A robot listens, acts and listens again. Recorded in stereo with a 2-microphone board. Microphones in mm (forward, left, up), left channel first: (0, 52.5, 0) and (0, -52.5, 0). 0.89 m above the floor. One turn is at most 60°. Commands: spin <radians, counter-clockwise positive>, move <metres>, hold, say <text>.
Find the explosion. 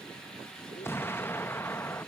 spin 0.35
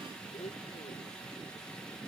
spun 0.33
hold
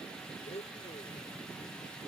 say I heard an explosion, but can't make it out now. It was about straight ahead or 140° left.